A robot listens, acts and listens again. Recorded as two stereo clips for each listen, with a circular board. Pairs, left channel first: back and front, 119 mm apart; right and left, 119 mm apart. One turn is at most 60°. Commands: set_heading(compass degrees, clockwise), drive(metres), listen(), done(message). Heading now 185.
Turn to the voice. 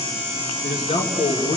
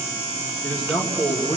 set_heading(245)
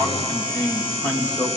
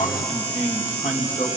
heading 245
set_heading(305)
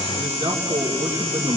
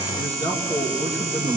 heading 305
set_heading(350)
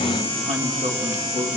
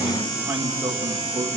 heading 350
set_heading(335)
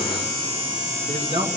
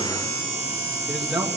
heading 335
done("Facing the man speaking.")